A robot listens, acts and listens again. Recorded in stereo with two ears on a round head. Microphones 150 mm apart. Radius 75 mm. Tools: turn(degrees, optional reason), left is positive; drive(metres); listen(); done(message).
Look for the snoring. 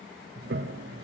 listen()
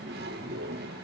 listen()
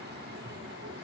done("I can't make out snoring to turn to.")